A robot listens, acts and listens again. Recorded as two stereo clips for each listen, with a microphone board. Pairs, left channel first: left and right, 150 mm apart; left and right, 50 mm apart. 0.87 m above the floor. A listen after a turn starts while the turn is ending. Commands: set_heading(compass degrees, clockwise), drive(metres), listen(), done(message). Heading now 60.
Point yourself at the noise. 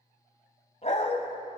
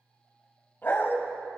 set_heading(10)
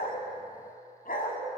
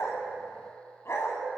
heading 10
set_heading(300)
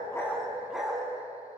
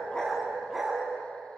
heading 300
done("Facing the dog barking.")